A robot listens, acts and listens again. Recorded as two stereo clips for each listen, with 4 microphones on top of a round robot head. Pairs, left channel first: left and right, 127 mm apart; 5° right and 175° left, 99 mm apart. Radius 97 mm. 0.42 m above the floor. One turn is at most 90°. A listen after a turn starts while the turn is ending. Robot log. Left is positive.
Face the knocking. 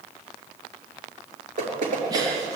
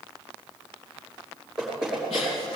note: The knocking: 100° right.
cmd yaw -90
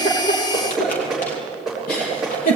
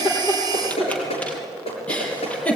end: Facing the knocking, over 4 m away.